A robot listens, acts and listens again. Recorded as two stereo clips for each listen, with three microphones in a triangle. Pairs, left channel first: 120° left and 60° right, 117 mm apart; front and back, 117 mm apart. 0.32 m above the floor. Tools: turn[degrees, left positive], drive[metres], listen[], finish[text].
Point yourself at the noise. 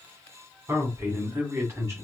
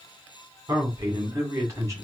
Thought: The man speaking: 120° right.
Action: turn[-120]
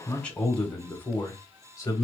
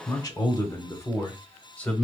Thought: The man speaking is now 75° left.
Action: turn[75]
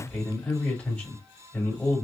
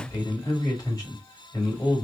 Thought: The man speaking is now 45° left.
Action: turn[45]
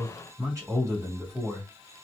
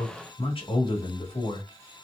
Thought: The man speaking is now 10° right.
Action: turn[-10]
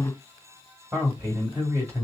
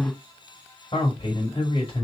Action: finish[Found it: a man speaking, straight ahead, 1 to 2 m away.]